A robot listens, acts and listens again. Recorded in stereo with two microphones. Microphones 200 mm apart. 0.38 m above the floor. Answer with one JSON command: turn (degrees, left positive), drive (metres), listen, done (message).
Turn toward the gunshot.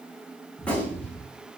{"turn": 30}
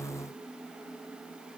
{"listen": true}
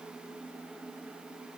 {"done": "I heard a gunshot, but can't make it out now. It was about 25° right or 145° left."}